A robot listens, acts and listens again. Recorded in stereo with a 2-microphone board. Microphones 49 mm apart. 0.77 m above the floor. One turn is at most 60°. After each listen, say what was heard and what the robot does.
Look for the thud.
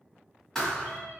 Turn 30° left.
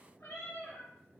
Keep listening.
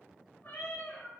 I heard a thud, but can't make it out now. It was about 20° right or 140° left.